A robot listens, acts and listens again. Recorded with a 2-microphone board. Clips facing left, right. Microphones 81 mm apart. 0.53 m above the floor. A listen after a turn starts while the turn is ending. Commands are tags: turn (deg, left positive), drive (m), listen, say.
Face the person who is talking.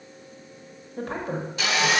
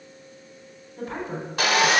<turn deg="60"/>
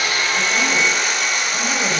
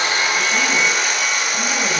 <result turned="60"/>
<listen/>
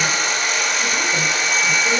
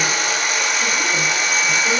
<listen/>
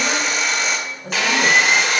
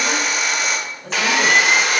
<turn deg="10"/>
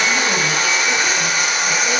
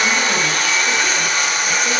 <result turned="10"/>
<listen/>
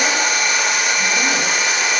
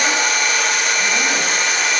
<listen/>
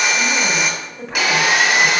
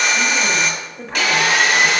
<say>Facing the woman speaking.</say>